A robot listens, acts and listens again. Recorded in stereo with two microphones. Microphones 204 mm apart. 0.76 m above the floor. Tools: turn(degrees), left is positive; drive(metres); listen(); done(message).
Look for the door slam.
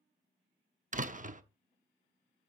turn(degrees=-40)
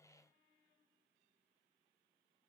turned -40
listen()
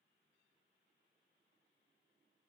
done("I heard a door slam, but can't make it out now. It was about straight ahead or 100° right.")